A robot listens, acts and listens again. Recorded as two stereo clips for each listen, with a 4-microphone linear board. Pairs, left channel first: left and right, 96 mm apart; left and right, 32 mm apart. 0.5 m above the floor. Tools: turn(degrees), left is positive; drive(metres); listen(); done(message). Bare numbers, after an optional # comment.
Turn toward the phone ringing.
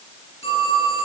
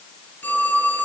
turn(90)
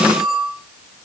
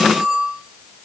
done("Found it: a phone ringing, straight ahead.")